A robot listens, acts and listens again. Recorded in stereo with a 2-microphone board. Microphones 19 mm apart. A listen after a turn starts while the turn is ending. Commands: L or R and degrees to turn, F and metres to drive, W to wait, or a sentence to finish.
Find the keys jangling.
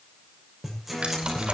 R60
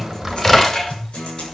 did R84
L25
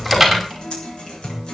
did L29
Facing the keys jangling, over 4 m away.